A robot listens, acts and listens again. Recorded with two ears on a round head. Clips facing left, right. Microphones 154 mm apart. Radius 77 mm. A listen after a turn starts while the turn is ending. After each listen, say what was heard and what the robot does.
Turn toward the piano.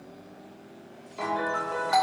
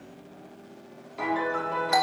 Turn 30° left.
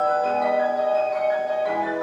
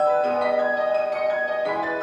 So it is at 30° right. Turn 30° right.
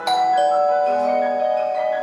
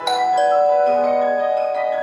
Keep listening.
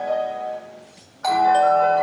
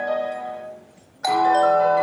The piano is now 15° right. Turn 15° right.
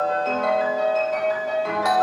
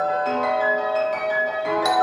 Found it: a piano, straight ahead, over 4 m away.